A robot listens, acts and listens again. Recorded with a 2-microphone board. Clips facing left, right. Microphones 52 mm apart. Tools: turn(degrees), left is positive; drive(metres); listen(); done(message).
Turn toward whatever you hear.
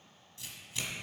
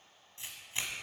turn(degrees=-30)
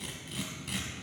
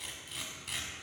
done("Facing the tearing paper, 1 to 2 m away.")